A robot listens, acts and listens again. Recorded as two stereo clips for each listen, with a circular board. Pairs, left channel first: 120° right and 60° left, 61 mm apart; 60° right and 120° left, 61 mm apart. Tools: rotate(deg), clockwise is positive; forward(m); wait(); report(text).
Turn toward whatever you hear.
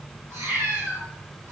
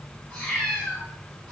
rotate(-25)
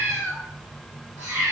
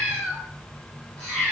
rotate(-30)
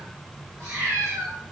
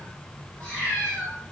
rotate(-15)
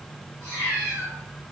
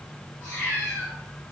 report("Found it: a cat meowing, straight ahead.")